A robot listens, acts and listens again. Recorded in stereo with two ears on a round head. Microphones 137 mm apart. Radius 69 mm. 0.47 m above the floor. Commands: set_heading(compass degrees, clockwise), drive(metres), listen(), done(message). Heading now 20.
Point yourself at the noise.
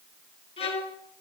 set_heading(340)
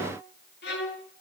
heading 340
set_heading(235)
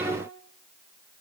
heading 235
listen()
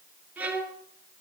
set_heading(245)
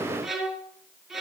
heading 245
done("Found it: a violin, straight ahead, 2 to 4 m away.")